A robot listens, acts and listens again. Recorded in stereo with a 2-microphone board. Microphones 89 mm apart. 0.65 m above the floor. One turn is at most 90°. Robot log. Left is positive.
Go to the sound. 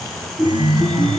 note: The chime: about 65° right or 115° right.
cmd yaw -65
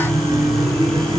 note: So it is at 55° right.
cmd yaw -55
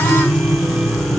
note: The chime is now 15° right.
cmd yaw -15
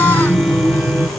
cmd fwd 1.0
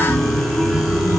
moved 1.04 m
cmd fwd 1.0
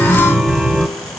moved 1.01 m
cmd fwd 1.0
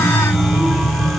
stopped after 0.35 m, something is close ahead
end: I am next to the chime.